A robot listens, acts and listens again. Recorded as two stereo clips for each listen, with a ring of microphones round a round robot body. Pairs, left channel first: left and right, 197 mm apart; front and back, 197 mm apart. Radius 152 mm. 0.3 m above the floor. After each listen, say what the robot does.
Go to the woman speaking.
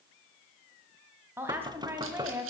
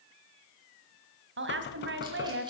Turn 170° right.
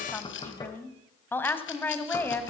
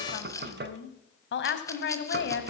Turn 10° left.
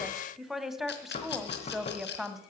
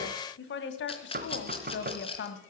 Drive 1.0 m forward.
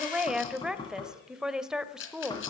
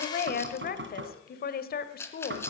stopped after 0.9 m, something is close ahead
I am next to the woman speaking.